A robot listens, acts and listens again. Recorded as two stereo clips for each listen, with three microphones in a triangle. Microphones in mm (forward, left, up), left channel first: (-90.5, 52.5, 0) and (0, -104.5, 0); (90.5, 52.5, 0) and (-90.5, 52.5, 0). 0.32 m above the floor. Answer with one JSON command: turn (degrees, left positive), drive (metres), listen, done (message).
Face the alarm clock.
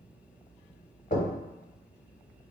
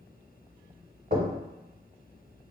{"listen": true}
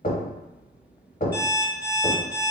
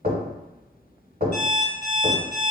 {"turn": -35}
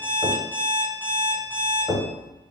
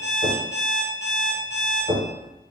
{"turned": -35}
{"turn": 20}
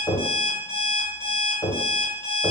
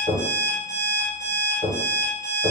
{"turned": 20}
{"done": "Found it: an alarm clock, straight ahead, 1 to 2 m away."}